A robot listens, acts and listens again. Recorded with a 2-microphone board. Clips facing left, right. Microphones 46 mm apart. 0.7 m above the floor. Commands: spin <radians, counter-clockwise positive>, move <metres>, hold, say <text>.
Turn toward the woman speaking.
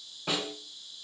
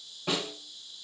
hold
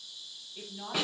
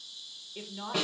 spin -0.70
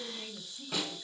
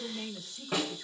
spin -1.92
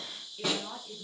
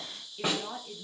spin -0.17
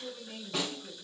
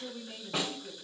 spin -0.17
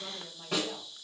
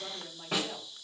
say Found it: a woman speaking, straight ahead.